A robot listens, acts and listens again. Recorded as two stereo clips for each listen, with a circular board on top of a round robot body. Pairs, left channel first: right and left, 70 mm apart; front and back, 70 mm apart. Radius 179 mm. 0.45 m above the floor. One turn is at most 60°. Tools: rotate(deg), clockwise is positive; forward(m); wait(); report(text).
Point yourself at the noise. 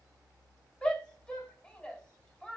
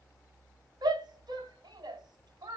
rotate(60)
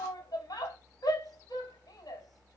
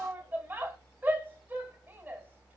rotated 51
rotate(60)
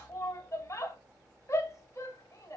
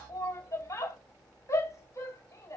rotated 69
rotate(45)
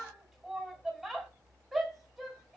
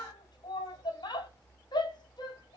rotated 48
report("Found it: a shout, straight ahead.")